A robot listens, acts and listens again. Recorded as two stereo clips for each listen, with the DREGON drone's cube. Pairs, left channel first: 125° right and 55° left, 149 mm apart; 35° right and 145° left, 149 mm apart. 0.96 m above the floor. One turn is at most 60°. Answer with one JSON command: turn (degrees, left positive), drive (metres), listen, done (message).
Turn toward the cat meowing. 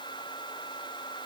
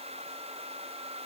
{"listen": true}
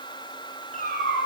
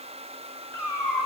{"turn": -60}
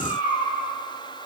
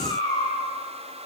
{"turn": -60}
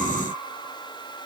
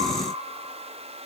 {"listen": true}
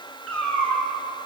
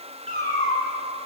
{"turn": -45}
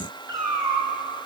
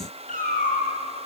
{"turn": -10}
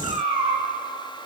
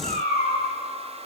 {"done": "Found it: a cat meowing, straight ahead."}